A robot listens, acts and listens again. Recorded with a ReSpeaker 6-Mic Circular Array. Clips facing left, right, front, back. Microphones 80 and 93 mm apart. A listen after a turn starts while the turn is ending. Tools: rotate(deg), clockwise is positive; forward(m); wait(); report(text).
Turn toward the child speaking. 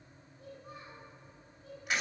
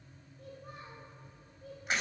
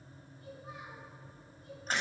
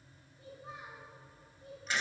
rotate(115)
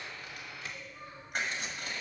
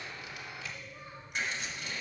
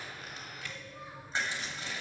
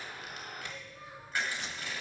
wait()
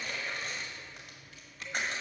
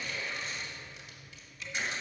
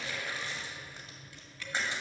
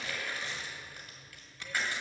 wait()
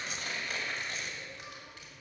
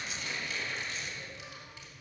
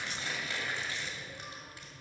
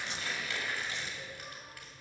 report("I heard a child speaking from this way, but can't make it out now.")